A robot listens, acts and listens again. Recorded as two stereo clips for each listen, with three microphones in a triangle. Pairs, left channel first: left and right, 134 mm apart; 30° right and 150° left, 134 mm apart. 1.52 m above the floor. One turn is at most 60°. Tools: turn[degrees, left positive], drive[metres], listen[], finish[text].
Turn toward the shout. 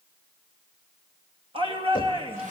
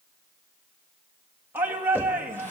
Thought: The shout: 135° right.
Action: turn[-60]
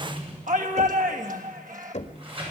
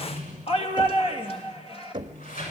Thought: The shout is now 75° right.
Action: turn[-60]
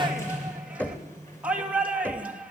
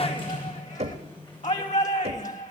Thought: The shout is now 10° right.
Action: turn[-10]
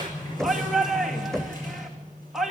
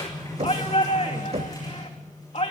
Action: finish[Found it: a shout, straight ahead, 2 to 4 m away.]